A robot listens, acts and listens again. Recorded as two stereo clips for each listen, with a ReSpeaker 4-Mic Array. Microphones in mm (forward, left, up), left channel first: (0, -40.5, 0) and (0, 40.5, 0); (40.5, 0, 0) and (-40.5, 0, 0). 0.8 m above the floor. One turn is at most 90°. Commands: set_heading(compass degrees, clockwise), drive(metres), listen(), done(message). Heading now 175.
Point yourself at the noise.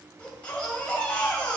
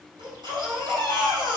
set_heading(265)
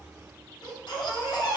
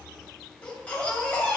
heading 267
set_heading(342)
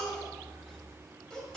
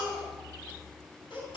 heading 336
done("Found it: a baby crying, straight ahead.")